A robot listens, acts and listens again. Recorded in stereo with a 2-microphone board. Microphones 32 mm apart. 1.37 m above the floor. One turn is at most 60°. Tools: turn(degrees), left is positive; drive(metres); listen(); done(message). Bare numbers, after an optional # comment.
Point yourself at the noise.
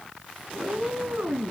# The cat meowing: about 70° right or 110° right.
turn(-60)
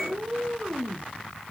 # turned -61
# So it is at 30° right.
turn(-30)
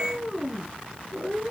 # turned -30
done("Facing the cat meowing, over 4 m away.")